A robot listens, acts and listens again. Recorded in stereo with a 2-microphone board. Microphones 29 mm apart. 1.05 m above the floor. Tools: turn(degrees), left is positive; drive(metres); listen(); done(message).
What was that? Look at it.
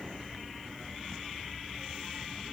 listen()
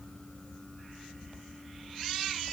listen()
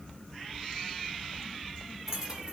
turn(degrees=-20)
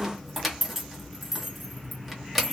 done("Facing the keys jangling, under 1 m away.")